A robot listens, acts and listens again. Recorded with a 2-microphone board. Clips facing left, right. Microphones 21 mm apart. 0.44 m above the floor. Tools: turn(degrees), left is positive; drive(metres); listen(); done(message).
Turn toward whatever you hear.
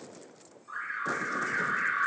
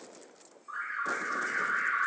turn(degrees=45)
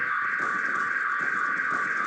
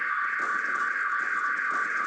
turn(degrees=85)
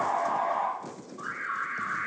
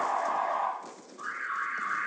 turn(degrees=10)
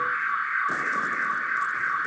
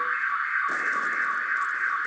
done("Found it: an alarm, straight ahead, 1 to 2 m away.")